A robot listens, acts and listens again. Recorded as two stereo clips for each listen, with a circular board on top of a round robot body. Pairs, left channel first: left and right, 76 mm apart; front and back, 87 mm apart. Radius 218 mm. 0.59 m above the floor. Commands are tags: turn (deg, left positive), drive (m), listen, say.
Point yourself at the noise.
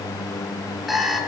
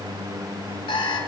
<say>Found it: an alarm clock, straight ahead, over 4 m away.</say>